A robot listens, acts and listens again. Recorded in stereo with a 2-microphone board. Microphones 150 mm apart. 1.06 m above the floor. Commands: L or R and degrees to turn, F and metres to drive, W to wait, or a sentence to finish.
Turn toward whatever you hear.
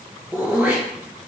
R30
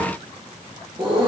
R135
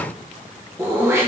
R20
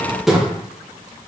Found it: throat clearing, straight ahead.